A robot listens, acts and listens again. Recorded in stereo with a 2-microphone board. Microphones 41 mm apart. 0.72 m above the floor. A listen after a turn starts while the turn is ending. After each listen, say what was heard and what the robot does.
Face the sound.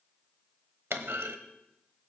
Turn 90° right.
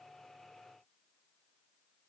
I heard a clunk from this way, but can't make it out now.